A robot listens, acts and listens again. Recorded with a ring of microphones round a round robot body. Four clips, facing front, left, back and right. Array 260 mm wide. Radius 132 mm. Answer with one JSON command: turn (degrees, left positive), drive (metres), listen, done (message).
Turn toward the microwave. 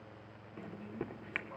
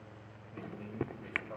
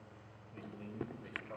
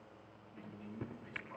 {"turn": 75}
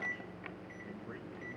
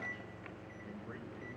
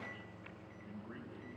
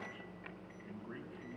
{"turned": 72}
{"done": "Found it: a microwave, straight ahead."}